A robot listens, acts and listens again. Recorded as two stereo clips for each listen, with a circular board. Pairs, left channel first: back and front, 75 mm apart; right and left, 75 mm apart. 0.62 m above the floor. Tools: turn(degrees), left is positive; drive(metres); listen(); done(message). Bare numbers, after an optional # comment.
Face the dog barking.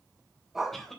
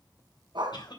# The dog barking: 85° left.
turn(85)
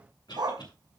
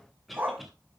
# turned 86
# The dog barking is now 25° left.
turn(25)
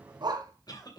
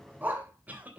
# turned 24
# The dog barking is now 25° left.
turn(25)
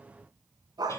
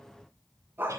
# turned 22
# The dog barking is now 25° left.
turn(25)
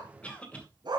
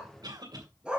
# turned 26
# The dog barking is now 15° left.
turn(15)
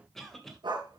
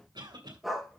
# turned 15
done("Facing the dog barking.")